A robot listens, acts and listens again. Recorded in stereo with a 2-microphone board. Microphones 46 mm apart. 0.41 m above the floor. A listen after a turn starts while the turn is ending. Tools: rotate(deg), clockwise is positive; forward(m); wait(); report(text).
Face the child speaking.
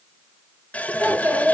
rotate(55)
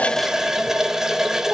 wait()
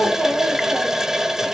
report("Facing the child speaking, over 4 m away.")